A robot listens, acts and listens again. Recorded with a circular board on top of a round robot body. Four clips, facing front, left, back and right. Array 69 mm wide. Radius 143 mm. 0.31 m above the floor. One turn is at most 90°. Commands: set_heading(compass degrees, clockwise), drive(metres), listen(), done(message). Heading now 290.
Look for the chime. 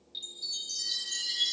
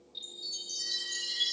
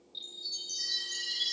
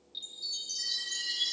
set_heading(315)
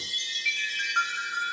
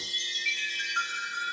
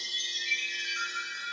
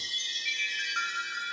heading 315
set_heading(325)
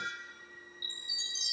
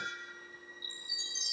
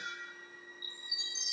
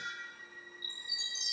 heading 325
done("Found it: a chime, straight ahead.")